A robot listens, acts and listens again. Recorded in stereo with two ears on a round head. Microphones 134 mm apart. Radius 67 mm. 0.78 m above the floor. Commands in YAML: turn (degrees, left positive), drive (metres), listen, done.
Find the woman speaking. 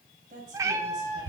turn: -55
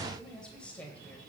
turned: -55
turn: 10
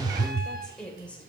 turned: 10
turn: 10
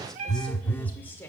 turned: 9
turn: 15
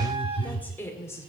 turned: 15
turn: 20
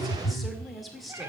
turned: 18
done: "Found it: a woman speaking, straight ahead."